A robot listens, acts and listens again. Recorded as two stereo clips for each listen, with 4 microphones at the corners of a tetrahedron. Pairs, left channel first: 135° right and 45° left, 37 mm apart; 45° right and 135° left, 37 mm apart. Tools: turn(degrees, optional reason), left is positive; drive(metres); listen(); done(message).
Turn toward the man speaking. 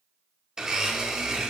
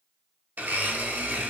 listen()
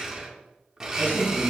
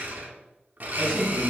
turn(degrees=-145, reason="The man speaking: 145° right.")
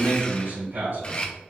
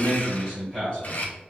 turn(degrees=25, reason="The man speaking is now 25° left.")
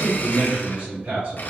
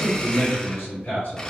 turn(degrees=-10, reason="The man speaking is now 10° right.")
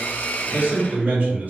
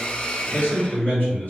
done("Facing the man speaking.")